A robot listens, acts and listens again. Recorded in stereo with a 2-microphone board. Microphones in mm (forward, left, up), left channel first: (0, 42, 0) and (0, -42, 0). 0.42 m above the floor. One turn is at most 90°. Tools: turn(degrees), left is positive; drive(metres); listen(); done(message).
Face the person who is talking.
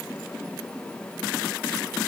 listen()
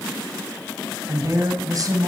turn(degrees=-50)
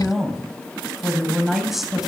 done("Found it: a woman speaking, straight ahead.")